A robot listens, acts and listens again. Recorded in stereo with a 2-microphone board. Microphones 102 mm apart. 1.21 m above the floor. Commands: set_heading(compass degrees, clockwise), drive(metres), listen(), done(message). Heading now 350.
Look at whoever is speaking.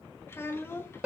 set_heading(325)
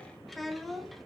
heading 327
done("Found it: a child speaking, straight ahead.")